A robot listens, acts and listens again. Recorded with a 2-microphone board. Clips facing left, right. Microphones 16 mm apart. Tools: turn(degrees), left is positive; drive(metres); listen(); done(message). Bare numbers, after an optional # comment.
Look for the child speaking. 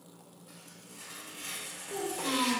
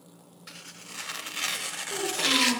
turn(-30)
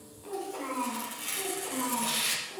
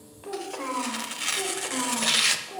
# So it is at 125° right.
turn(-125)
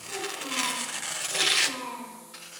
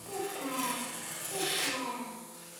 # The child speaking is now 10° right.
turn(-10)
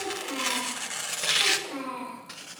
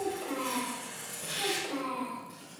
done("Facing the child speaking, over 4 m away.")